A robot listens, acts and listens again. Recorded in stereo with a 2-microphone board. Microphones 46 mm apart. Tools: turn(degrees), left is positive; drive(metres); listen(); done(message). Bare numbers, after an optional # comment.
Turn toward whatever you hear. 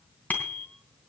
# The bicycle bell: about 40° left or 140° left.
turn(40)
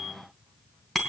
done("Facing the bicycle bell, 2 to 4 m away.")